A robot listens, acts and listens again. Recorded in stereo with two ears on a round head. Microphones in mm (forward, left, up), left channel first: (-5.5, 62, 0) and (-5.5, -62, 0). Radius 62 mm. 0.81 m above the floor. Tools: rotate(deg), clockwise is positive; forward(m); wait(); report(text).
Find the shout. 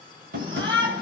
rotate(35)
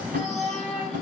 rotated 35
report("Found it: a shout, straight ahead, over 4 m away.")